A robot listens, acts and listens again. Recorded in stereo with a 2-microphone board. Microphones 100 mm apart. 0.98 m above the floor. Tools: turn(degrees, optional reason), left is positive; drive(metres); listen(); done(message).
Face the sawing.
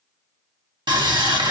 turn(degrees=-50, reason="The sawing: about 50° right or 130° right.")
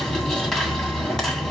done("Facing the sawing.")